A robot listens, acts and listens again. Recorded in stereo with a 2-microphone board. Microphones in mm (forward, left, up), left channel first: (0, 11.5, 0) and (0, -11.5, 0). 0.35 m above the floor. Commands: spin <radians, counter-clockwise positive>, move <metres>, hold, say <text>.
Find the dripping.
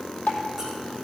spin 1.57
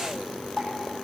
say Found it: dripping, straight ahead, 2 to 4 m away.